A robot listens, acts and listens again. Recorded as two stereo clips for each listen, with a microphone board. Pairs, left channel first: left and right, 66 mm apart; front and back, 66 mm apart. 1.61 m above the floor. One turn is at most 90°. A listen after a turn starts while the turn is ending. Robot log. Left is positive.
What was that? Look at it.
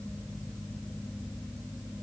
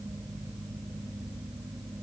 cmd idle
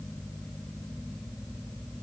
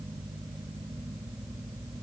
cmd idle
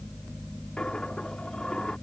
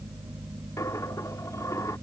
note: The dropped coin: 15° left.
cmd yaw +15
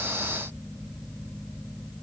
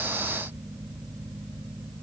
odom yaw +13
end: Facing where the dropped coin came from. I can't hear it now.